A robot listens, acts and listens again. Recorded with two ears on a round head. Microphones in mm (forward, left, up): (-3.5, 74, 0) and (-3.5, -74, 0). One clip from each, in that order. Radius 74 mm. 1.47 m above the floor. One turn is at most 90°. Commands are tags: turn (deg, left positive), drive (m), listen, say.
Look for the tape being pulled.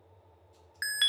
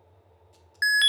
<listen/>
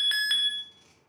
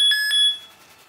<listen/>
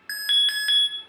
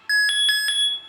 <say>I can't make out tape being pulled to turn to.</say>